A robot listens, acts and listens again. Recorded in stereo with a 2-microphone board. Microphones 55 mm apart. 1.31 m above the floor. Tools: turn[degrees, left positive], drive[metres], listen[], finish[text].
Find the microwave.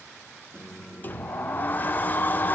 Thought: The microwave: about 20° right or 160° right.
Action: turn[-20]
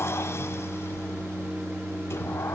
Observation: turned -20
Thought: So it is at 145° right.
Action: turn[-145]
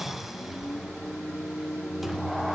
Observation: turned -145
Thought: The microwave is now 10° right.
Action: turn[-10]
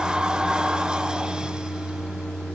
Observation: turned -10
Action: finish[Found it: a microwave, straight ahead, 2 to 4 m away.]